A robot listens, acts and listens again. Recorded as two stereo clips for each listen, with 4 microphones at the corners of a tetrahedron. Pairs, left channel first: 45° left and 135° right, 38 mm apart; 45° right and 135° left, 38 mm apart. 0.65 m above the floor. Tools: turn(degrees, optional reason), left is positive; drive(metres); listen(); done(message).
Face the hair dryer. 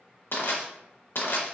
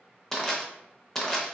listen()
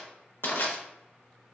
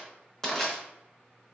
listen()
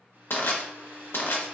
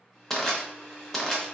turn(degrees=-130, reason="The hair dryer: 130° right.")
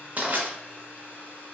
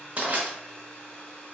turn(degrees=15, reason="The hair dryer is now 15° left.")
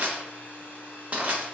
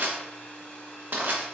turn(degrees=10, reason="The hair dryer is now 10° left.")
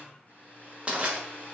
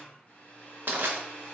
done("Found it: a hair dryer, straight ahead.")